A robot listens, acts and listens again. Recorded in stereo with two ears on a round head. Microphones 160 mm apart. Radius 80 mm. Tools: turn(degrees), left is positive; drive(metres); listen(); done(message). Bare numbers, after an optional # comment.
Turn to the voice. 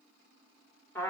listen()
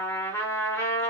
listen()
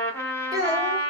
# The child speaking: about 20° right or 160° right.
turn(-20)
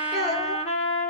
done("Found it: a child speaking, straight ahead, 1 to 2 m away.")